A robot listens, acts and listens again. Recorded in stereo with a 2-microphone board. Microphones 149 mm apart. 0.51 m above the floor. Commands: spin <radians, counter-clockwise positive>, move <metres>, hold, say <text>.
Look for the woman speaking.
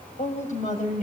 spin 0.96
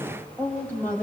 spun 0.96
spin 0.17
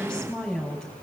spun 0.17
say Facing the woman speaking, over 4 m away.